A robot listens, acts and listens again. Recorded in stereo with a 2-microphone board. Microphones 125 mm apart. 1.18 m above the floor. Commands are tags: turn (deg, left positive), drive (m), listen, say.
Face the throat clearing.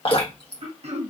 <turn deg="-55"/>
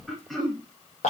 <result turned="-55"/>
<say>Facing the throat clearing, 1 to 2 m away.</say>